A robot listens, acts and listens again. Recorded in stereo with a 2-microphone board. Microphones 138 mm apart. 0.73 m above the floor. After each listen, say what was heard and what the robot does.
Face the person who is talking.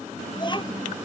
The child speaking: about 35° left or 145° left. Turn 35° left.
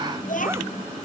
So it is at 115° left. Turn 115° left.
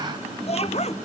The child speaking is now 45° left. Turn 45° left.
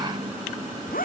Keep listening.
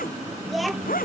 Found it: a child speaking, straight ahead.